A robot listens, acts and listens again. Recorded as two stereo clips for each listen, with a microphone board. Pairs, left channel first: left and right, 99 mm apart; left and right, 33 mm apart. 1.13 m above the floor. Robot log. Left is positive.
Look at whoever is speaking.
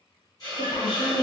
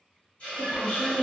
note: The woman speaking: about 60° left or 120° left.
cmd yaw +60
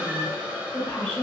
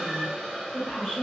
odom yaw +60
note: So it is at 10° left.
cmd yaw +10
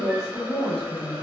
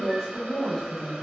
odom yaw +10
end: Found it: a woman speaking, straight ahead.